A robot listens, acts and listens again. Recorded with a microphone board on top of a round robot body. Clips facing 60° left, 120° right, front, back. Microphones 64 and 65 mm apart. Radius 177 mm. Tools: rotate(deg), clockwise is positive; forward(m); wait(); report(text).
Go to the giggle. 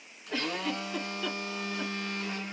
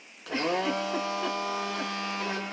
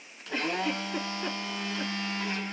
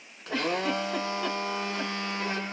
rotate(-180)
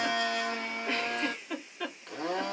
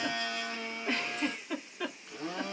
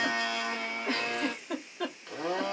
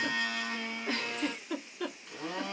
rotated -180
rotate(30)
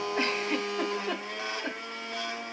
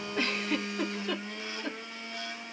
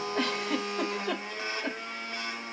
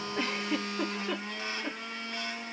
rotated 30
forward(1.0)
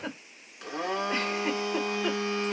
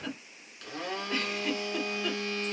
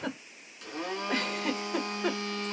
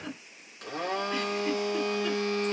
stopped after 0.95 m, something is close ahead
report("I am next to the giggle.")